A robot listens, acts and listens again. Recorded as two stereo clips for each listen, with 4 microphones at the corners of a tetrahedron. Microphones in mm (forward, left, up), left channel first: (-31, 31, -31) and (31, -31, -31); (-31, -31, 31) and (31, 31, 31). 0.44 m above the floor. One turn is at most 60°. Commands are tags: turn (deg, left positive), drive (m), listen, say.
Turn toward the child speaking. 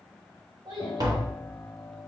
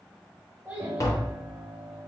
<turn deg="-30"/>
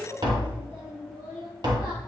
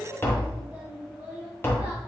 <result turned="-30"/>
<turn deg="-20"/>
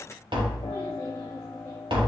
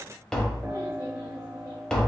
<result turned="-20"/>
<listen/>
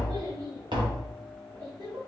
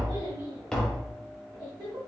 <say>Found it: a child speaking, straight ahead, 2 to 4 m away.</say>